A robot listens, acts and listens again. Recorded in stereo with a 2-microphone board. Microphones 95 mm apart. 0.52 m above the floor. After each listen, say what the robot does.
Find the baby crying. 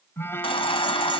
Turn 70° left.
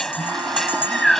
Facing the baby crying.